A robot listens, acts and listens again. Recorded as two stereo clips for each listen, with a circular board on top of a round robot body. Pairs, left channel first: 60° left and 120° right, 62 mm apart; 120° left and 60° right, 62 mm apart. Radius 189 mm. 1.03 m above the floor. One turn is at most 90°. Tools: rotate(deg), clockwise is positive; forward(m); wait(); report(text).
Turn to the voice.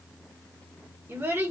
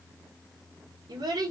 rotate(65)
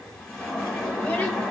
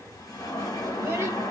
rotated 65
wait()
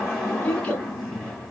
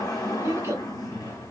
rotate(10)
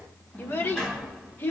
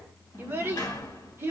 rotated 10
report("Facing the child speaking.")